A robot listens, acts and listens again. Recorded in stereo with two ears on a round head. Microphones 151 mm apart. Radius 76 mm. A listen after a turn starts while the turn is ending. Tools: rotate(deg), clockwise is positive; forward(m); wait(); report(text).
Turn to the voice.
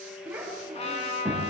rotate(30)
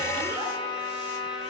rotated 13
wait()
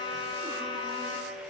wait()
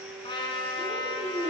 rotate(160)
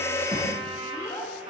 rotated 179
rotate(-20)
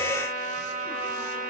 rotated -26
wait()
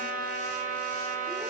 wait()
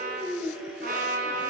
report("Found it: a child speaking, straight ahead.")